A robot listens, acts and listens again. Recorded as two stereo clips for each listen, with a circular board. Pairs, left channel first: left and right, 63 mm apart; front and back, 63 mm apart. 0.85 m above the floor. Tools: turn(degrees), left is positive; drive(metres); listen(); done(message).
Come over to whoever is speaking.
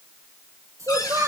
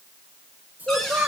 turn(degrees=-120)
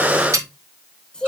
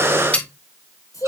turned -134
turn(degrees=15)
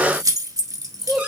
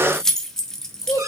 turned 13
drive(metres=1.0)
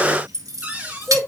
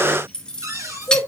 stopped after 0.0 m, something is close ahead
done("Blocked. The child speaking is further on, straight ahead.")